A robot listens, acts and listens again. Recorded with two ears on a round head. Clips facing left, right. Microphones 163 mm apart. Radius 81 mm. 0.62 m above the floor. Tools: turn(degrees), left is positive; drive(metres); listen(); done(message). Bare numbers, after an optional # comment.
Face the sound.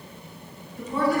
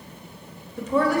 # The woman speaking: about 55° right or 125° right.
turn(-55)
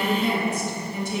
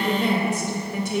# So it is at 50° right.
turn(-50)
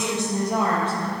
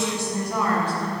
# The woman speaking is now 25° left.
turn(25)
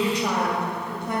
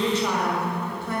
# The woman speaking is now 15° left.
turn(15)
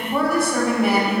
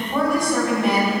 done("Found it: a woman speaking, straight ahead, 2 to 4 m away.")